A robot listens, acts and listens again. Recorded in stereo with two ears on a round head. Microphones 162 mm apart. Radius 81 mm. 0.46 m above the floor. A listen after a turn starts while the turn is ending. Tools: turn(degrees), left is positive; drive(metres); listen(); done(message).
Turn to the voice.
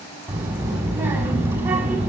turn(degrees=-30)
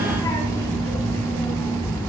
turn(degrees=15)
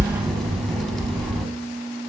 done("Found it: a child speaking, straight ahead.")